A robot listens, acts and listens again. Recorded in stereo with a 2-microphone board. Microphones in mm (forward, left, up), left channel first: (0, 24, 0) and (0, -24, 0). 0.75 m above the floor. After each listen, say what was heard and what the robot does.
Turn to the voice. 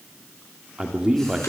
Turn 30° right.
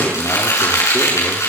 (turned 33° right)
So it is at 20° left. Turn 20° left.
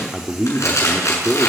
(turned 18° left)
Facing the man speaking.